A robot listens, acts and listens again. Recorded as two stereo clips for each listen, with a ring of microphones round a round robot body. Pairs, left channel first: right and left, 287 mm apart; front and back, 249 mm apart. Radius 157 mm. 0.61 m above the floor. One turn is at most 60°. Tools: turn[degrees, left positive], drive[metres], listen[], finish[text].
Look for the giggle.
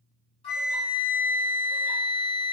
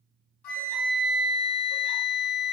Action: listen[]
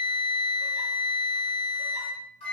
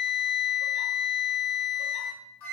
Action: listen[]
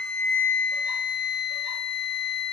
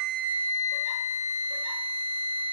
Action: finish[I can't make out a giggle to turn to.]